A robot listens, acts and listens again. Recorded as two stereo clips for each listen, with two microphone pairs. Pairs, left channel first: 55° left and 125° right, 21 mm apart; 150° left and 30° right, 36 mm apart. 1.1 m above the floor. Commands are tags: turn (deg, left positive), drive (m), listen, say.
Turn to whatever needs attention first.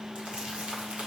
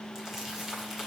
<listen/>
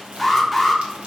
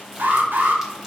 <turn deg="-35"/>
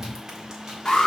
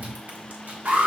<say>Found it: an alarm, straight ahead, 1 to 2 m away.</say>